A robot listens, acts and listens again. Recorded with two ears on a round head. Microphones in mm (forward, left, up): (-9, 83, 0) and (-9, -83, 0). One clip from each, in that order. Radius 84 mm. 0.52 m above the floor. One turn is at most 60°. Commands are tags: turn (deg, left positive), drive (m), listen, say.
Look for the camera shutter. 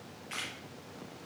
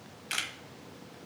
<turn deg="-60"/>
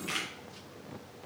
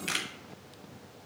<turn deg="-40"/>
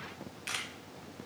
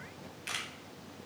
<say>Facing the camera shutter, 1 to 2 m away.</say>